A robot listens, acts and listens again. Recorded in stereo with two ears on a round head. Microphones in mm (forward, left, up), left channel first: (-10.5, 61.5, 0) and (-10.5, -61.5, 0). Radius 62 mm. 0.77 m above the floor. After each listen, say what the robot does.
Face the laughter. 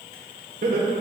Turn 65° right.
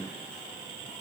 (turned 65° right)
Keep listening.
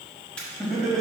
Found it: laughter, straight ahead.